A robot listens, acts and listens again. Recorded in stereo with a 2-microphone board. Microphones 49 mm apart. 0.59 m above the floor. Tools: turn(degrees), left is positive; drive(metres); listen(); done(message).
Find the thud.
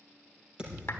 turn(degrees=-20)
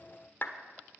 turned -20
listen()
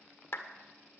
done("I heard a thud, but can't make it out now. It was about straight ahead or 140° right.")